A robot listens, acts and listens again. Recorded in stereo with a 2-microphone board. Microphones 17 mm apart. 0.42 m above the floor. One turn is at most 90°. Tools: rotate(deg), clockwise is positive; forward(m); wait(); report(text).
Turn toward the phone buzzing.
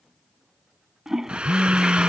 rotate(-30)
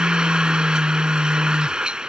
rotate(-90)
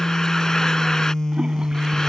rotate(-35)
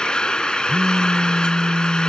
rotate(-15)
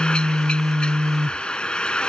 report("Facing the phone buzzing.")